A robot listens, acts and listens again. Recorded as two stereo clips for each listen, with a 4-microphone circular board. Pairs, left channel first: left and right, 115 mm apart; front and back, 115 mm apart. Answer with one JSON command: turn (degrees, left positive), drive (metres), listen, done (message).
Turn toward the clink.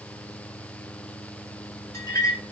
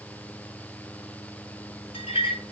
{"turn": 30}
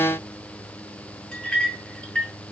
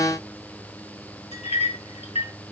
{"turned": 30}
{"turn": 10}
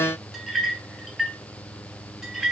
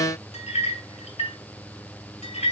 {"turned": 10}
{"done": "Facing the clink, 2 to 4 m away."}